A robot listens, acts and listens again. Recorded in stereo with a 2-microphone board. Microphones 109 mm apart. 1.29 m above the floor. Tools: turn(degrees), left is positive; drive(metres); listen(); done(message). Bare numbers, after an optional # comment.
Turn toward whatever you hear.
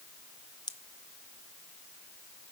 # The pop: about 40° left or 140° left.
turn(40)
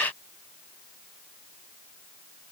listen()
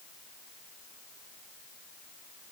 done("I heard a pop, but can't make it out now. It was about straight ahead or 100° left.")